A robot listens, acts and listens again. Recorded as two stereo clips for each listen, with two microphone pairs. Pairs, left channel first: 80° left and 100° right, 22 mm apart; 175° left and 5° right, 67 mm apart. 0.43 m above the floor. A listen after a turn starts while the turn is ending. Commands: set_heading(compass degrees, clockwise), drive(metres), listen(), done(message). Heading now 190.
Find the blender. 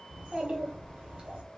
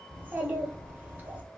listen()
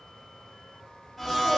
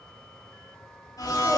set_heading(35)
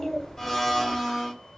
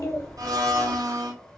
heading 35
done("Found it: a blender, straight ahead.")